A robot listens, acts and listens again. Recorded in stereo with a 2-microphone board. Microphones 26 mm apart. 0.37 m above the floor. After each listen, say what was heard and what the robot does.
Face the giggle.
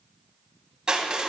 Keep listening.
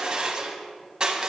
Keep listening.
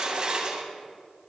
I can't make out a giggle, only crushing.